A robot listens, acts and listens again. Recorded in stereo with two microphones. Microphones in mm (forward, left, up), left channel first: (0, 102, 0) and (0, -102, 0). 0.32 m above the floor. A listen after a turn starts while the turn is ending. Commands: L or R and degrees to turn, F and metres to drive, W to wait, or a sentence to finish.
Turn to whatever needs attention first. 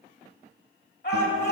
L55
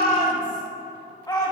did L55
L25
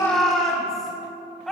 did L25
Found it: a shout, straight ahead, 2 to 4 m away.